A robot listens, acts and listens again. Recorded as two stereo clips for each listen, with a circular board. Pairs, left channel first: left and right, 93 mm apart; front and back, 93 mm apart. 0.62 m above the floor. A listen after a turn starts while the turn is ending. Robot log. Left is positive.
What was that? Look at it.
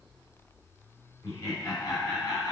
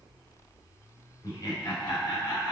note: The laughter: 50° left.
cmd yaw +50
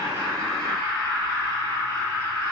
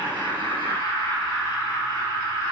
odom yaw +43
note: The laughter is now 25° left.
cmd yaw +25
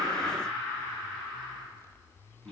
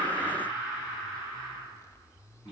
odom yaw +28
end: Found it: laughter, straight ahead.